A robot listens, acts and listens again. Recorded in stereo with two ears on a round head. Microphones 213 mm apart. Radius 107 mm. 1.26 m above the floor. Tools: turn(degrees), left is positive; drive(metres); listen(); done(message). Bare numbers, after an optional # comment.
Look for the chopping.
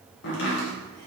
# The chopping: about 50° left or 130° left.
turn(50)
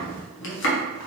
# So it is at 65° left.
turn(65)
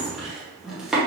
done("Found it: chopping, straight ahead, under 1 m away.")